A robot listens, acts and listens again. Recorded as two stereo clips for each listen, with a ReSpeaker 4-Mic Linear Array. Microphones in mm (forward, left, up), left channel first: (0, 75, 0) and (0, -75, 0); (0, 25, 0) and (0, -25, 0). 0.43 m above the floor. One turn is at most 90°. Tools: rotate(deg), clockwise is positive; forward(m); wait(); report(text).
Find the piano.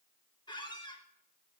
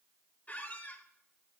wait()
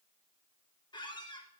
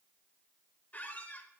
wait()
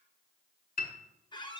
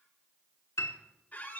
rotate(-75)
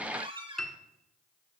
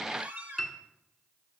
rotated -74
report("Found it: a piano, straight ahead.")